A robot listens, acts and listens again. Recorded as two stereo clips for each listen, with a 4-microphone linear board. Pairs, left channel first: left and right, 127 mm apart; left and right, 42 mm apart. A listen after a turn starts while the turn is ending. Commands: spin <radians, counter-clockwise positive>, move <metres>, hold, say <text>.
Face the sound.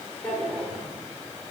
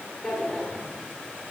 spin 0.52
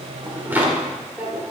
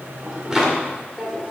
spin -0.26
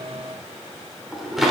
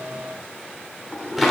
say Found it: a drawer, straight ahead.